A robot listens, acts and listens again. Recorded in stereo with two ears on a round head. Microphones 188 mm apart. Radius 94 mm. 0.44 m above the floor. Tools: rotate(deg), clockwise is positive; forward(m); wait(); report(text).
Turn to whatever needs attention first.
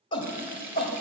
rotate(-25)
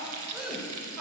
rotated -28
report("Found it: a shout, straight ahead, 1 to 2 m away.")